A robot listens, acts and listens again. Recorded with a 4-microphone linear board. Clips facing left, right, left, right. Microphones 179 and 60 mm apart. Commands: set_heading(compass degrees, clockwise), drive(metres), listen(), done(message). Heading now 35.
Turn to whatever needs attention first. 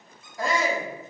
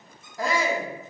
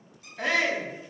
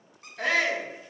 set_heading(5)
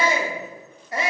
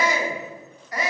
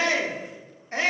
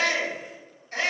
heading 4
set_heading(214)
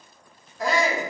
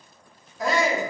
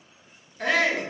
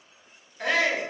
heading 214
done("Facing the shout, under 1 m away.")